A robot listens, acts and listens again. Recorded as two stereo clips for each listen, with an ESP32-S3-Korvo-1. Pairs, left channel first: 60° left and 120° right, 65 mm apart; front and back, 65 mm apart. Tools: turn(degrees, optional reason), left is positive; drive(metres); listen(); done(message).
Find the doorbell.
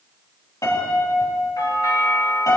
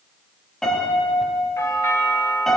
turn(degrees=40, reason="The doorbell: 40° left.")
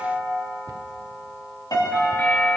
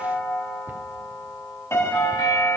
done("Found it: a doorbell, straight ahead.")